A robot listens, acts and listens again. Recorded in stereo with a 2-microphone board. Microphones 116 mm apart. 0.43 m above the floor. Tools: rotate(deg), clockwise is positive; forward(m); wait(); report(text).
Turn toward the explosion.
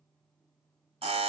wait()
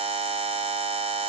wait()
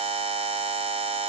report("I can't make out an explosion, only a buzzer.")